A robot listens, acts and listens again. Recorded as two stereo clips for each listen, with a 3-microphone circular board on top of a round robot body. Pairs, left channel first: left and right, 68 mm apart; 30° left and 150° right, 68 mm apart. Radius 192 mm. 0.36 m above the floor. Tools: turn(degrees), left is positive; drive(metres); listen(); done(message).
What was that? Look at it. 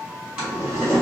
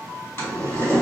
turn(degrees=-25)
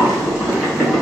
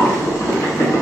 turn(degrees=-15)
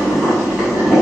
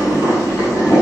done("Found it: boiling, straight ahead.")